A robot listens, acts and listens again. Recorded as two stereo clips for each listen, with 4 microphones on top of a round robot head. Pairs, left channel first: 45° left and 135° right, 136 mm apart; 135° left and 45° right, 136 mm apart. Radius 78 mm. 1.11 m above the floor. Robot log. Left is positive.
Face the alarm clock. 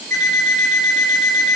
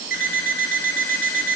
note: The alarm clock: 50° right.
cmd yaw -50
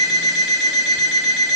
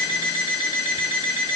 end: Found it: an alarm clock, straight ahead.